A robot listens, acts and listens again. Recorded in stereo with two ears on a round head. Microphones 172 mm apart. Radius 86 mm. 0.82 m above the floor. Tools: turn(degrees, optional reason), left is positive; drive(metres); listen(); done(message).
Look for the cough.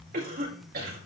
turn(degrees=-50, reason="The cough: about 50° right or 130° right.")
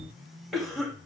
done("Found it: a cough, straight ahead, over 4 m away.")